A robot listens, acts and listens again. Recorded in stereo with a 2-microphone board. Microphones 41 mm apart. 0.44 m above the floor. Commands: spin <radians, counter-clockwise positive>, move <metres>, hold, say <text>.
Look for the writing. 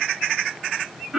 hold
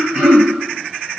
hold
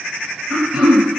say I can't make out writing, only throat clearing.